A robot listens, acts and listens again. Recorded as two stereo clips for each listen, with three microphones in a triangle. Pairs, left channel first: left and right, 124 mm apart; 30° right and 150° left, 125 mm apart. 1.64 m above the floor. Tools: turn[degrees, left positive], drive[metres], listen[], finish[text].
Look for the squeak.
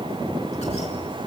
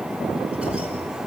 Action: listen[]
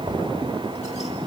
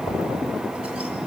Action: listen[]
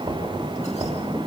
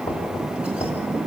Action: finish[I can't make out a squeak, only knocking.]